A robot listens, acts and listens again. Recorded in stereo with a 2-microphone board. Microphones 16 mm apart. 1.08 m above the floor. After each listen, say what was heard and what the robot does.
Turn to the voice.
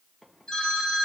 Keep listening.
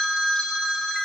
Keep listening.
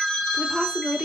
The woman speaking: about 70° right or 110° right. Turn 70° right.
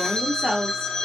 So it is at 45° right. Turn 45° right.
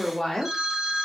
The woman speaking is now 25° left. Turn 25° left.
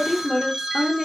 The woman speaking is now 10° left. Turn 10° left.
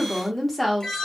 Found it: a woman speaking, straight ahead.